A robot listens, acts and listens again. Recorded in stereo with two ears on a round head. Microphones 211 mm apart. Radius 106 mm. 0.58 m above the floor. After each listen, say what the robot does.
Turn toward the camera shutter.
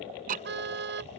Keep listening.
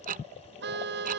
Keep listening.
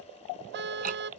I can't make out a camera shutter, only ticking and a car horn.